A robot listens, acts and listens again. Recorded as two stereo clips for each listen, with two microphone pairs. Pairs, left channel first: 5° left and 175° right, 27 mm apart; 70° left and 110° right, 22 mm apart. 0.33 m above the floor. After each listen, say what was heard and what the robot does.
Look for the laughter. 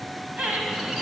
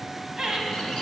The laughter: 145° right. Turn 145° right.
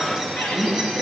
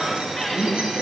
Keep listening.
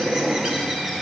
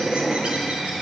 Keep listening.
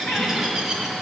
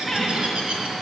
Facing where the laughter came from. I can't hear it now.